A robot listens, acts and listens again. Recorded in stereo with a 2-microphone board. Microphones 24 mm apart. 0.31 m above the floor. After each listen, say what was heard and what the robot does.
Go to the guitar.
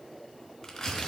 Keep listening.
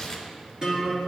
The guitar: about 30° right or 150° right. Turn 30° right.
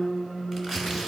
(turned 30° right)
So it is at 120° right. Turn 120° right.
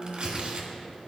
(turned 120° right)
Drive 1.0 m forward.
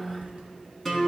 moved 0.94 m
The guitar is now 10° left. Turn 10° left.
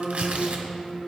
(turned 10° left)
Drive 1.0 m forward.
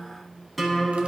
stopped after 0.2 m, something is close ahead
I am next to the guitar.